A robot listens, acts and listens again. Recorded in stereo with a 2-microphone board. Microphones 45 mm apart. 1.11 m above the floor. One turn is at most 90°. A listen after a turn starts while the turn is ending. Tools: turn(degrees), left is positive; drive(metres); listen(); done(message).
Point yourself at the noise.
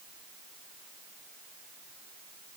listen()
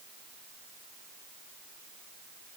listen()
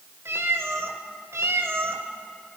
turn(degrees=-70)
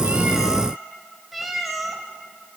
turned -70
done("Found it: a cat meowing, straight ahead, 2 to 4 m away.")